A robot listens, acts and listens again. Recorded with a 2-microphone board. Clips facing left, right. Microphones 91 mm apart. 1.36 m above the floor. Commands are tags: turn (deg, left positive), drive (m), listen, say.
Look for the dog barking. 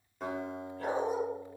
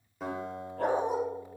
<turn deg="-75"/>
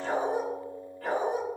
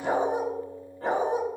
<turn deg="-30"/>
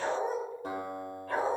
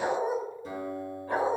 <turn deg="-20"/>
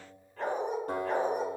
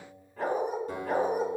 <turn deg="-10"/>
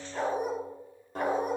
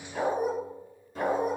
<say>Found it: a dog barking, straight ahead.</say>